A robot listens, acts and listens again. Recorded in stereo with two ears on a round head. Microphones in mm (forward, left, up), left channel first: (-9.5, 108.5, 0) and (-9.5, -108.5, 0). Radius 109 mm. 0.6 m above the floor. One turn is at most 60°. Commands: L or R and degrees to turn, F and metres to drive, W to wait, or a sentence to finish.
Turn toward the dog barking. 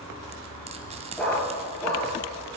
L30
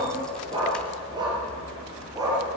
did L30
R15
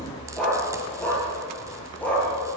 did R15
Found it: a dog barking, straight ahead, over 4 m away.